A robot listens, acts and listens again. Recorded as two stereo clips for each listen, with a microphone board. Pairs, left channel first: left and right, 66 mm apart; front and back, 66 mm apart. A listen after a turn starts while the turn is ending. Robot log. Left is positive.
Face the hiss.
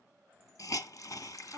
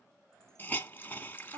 note: The hiss: 60° left.
cmd yaw +60
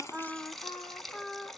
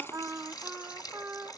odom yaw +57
end: Found it: a hiss, straight ahead.